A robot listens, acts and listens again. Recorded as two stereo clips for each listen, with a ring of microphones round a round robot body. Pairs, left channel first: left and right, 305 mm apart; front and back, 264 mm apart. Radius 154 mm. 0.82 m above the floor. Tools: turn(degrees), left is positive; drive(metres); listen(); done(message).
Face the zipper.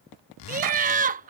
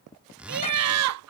turn(degrees=95)
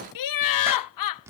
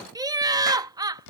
listen()
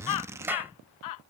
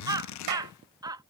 turn(degrees=-10)
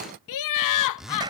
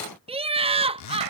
done("Found it: a zipper, straight ahead.")